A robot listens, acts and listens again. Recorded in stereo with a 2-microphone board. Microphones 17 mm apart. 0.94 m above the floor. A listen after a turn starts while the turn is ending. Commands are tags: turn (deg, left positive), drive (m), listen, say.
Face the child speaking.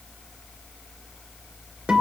<listen/>
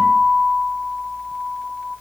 <listen/>
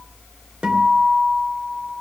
<say>I can't make out a child speaking, only a guitar.</say>